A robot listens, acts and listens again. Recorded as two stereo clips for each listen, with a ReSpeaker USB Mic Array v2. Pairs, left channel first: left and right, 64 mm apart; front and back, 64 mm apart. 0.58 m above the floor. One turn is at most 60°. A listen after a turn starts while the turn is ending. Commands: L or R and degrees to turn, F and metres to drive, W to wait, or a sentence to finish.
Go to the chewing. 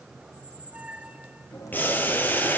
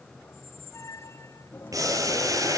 L60
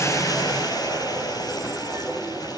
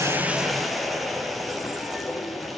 W
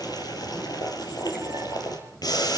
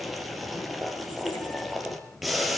W
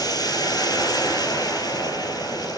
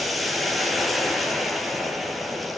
I heard chewing from this way, but can't make it out now. I did not reach it.